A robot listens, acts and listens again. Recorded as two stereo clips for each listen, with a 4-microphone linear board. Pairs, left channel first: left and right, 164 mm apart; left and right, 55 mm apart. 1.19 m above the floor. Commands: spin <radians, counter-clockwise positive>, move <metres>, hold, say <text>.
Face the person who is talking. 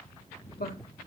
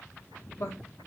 spin 1.13
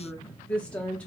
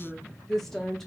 say Facing the woman speaking, under 1 m away.